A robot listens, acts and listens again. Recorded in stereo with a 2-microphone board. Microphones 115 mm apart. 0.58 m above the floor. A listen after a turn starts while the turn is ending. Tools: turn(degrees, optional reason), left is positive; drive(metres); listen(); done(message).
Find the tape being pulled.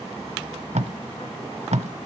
turn(degrees=-90)
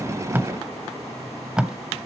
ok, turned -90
done("Facing the tape being pulled, under 1 m away.")